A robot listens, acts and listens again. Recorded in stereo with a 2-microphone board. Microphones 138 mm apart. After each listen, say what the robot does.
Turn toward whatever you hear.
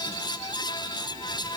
Keep listening.
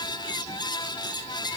Keep listening.
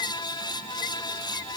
I can't make out anything.